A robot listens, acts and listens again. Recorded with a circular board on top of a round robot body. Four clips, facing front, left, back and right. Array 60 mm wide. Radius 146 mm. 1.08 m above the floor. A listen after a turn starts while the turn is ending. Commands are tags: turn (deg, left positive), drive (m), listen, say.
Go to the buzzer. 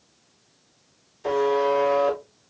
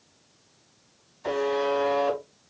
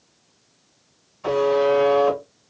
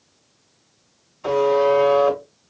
<turn deg="-140"/>
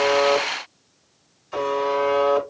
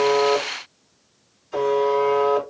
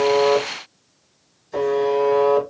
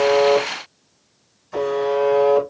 <drive m="1.0"/>
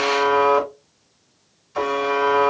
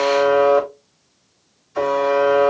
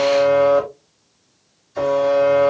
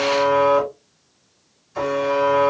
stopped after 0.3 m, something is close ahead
<turn deg="10"/>
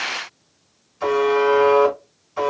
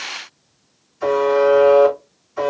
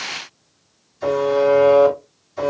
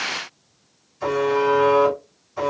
<say>Something is in my way. I am facing the buzzer but have not reached it.</say>